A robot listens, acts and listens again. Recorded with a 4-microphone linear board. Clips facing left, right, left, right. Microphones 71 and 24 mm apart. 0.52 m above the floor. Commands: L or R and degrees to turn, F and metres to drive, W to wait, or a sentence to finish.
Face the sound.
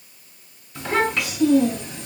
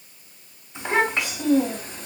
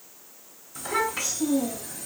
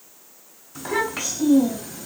R40
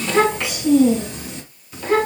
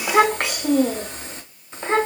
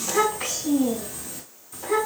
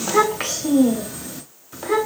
R30
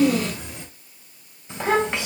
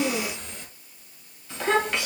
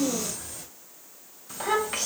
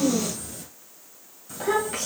L25
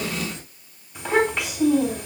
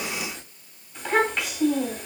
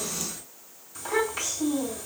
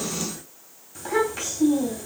Found it: a child speaking, straight ahead, 2 to 4 m away.